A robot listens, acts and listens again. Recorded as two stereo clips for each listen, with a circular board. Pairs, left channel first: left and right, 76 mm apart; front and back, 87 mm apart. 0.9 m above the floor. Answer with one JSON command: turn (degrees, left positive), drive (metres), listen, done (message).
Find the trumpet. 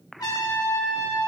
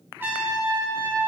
{"turn": 115}
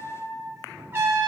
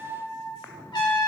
{"turn": -30}
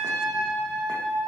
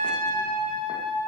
{"done": "Found it: a trumpet, straight ahead, 2 to 4 m away."}